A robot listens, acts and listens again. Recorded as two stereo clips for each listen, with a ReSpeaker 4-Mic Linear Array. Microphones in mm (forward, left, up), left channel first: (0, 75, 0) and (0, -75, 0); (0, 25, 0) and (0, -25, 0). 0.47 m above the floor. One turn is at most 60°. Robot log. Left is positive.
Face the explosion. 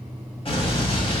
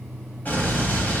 note: The explosion: about 40° left or 140° left.
cmd yaw +40
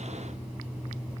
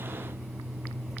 cmd idle
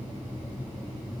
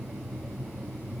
end: I heard an explosion, but can't make it out now. It was about straight ahead or 100° left.